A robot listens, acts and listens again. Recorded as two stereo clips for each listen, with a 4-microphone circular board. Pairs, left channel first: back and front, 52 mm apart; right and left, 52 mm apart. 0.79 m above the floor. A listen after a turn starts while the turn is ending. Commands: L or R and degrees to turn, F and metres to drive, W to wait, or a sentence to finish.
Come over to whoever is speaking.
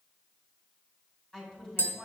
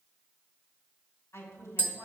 R105
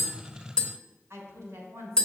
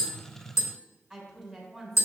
F1.0
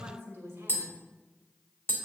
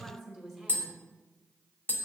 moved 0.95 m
F1.0
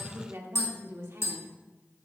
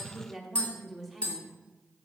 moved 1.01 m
F1.0
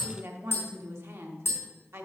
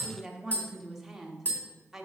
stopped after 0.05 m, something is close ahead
L10
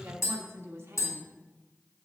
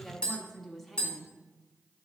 Arrived at the woman speaking, straight ahead.